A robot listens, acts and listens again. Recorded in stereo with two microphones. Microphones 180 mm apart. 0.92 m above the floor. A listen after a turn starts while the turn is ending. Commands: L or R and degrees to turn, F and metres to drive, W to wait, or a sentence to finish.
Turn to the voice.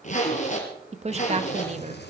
R40
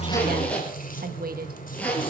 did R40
R95
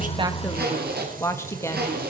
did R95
L15
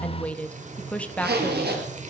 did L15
Facing the woman speaking, 1 to 2 m away.